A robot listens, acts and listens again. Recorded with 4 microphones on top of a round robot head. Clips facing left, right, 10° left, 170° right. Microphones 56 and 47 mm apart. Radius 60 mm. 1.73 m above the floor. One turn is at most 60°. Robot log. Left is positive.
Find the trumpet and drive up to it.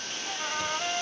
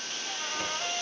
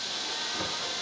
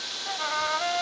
note: The trumpet: 170° left.
cmd yaw +60
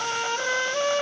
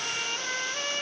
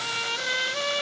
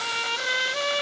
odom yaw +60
note: The trumpet is now 110° left.
cmd yaw +60
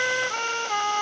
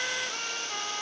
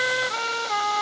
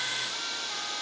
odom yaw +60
note: The trumpet is now 50° left.
cmd yaw +50
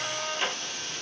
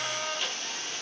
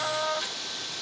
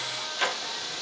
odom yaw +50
cmd fwd 1.0
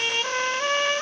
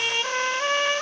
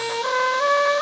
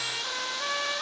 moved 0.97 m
cmd fwd 1.0
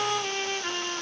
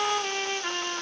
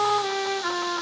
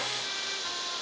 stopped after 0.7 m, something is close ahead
note: The trumpet is now 10° right.
cmd yaw -10
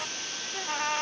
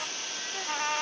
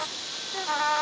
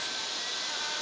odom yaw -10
end: I am next to the trumpet.